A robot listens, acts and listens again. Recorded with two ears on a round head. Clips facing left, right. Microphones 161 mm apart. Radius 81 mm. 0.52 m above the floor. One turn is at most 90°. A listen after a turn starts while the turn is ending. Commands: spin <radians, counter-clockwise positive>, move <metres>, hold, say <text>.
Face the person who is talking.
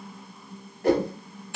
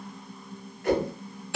hold
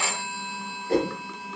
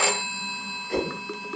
hold
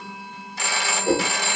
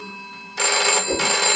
say I can't make out anyone speaking, only a whoosh and a phone ringing.